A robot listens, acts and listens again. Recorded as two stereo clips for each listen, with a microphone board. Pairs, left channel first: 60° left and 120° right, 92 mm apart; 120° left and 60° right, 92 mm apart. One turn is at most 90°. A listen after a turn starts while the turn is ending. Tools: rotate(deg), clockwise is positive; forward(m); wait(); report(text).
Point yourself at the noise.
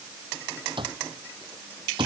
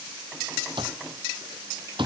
rotate(90)
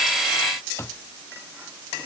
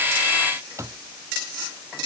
report("Found it: an alarm clock, straight ahead.")